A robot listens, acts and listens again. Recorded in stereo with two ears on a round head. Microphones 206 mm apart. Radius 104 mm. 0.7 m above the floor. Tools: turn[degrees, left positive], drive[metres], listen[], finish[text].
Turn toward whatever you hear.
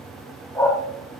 Action: turn[30]
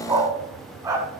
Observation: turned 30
Thought: So it is at 10° right.
Action: turn[-10]
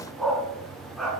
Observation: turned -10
Action: finish[Found it: a dog barking, straight ahead, 2 to 4 m away.]